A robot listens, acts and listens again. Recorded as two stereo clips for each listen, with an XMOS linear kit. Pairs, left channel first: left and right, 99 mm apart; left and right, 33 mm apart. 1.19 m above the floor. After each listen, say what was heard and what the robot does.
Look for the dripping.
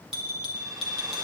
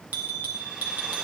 Keep listening.
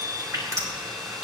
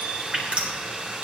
The dripping: about 35° right or 145° right. Turn 35° right.
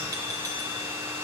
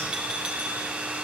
Keep listening.
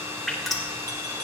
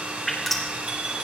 Found it: dripping, straight ahead.